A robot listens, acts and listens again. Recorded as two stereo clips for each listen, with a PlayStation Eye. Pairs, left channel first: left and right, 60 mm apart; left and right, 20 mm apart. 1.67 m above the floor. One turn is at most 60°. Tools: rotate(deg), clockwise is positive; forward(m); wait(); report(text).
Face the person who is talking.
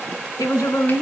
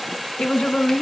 rotate(-60)
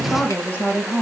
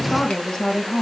rotate(-30)
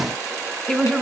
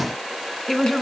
rotate(-15)
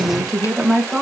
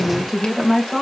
report("Found it: a woman speaking, straight ahead, 2 to 4 m away.")